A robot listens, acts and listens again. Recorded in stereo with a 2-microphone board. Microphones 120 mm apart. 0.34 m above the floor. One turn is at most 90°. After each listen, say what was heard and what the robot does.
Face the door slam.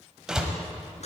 Turn 30° right.
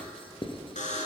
Keep listening.
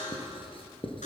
I heard a door slam, but can't make it out now. It was about 25° left or 145° right.